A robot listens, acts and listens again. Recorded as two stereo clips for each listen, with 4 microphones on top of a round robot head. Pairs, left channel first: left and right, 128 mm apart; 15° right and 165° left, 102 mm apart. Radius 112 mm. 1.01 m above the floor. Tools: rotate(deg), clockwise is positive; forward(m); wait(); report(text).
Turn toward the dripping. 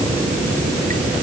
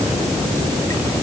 wait()
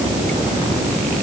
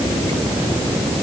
wait()
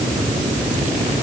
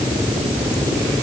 report("I can't make out dripping.")